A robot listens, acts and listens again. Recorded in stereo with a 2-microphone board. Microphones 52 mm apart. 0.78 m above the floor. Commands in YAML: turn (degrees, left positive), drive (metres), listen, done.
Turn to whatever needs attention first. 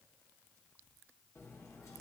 listen: true
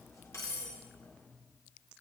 listen: true
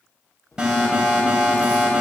turn: -15
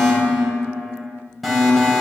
done: "Found it: an alarm, straight ahead, 2 to 4 m away."